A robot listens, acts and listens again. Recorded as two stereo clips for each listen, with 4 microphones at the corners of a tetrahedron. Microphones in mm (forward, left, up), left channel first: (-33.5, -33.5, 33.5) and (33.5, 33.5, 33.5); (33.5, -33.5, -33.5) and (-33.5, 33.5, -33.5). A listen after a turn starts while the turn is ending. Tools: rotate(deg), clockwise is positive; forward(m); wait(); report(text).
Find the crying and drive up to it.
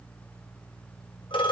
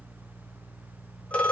wait()
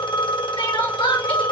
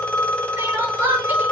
rotate(155)
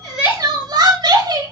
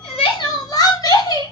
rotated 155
forward(1.0)
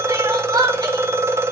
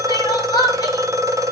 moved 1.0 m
forward(1.0)
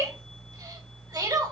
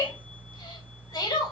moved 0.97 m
forward(1.0)
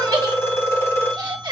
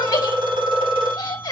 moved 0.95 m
forward(1.0)
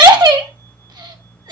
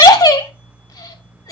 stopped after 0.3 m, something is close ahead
report("I am next to the crying.")